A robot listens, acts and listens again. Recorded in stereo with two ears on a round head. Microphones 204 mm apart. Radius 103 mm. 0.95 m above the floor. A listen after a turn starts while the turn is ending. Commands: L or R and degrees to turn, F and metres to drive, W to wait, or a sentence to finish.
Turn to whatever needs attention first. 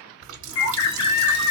L90
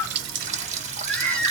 Facing the baby crying.